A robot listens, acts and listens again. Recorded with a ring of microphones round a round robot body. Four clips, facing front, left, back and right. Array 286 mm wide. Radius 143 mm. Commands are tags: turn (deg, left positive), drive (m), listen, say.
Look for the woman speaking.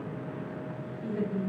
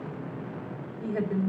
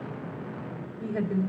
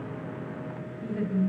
<turn deg="125"/>
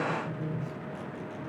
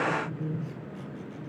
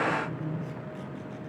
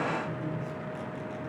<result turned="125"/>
<turn deg="35"/>
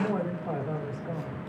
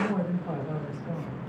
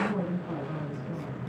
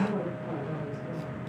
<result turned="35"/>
<turn deg="10"/>
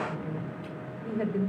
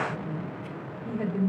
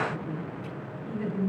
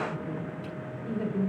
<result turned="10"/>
<say>Found it: a woman speaking, straight ahead.</say>